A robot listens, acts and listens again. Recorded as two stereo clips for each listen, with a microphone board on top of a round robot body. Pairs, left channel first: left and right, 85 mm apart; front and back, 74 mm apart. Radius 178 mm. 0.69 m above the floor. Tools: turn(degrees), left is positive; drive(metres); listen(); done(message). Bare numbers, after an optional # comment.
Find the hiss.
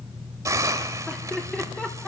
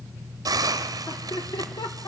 # The hiss: 145° right.
turn(-145)
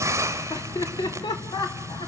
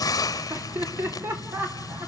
# The hiss is now 30° right.
turn(-30)
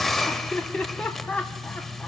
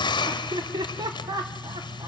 done("Facing the hiss.")